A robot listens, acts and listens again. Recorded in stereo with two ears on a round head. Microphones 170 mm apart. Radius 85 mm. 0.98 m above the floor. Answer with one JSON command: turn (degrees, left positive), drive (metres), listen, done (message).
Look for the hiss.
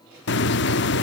{"turn": 65}
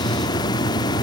{"turn": 25}
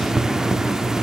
{"done": "Found it: a hiss, straight ahead."}